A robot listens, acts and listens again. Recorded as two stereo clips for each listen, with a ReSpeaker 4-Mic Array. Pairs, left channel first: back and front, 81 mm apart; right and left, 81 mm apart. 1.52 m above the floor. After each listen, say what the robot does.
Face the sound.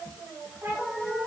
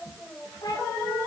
Turn 60° right.
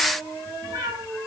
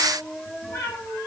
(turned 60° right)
Turn 35° right.
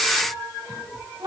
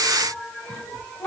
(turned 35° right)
Turn 20° right.
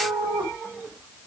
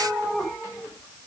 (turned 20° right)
Facing the cat meowing.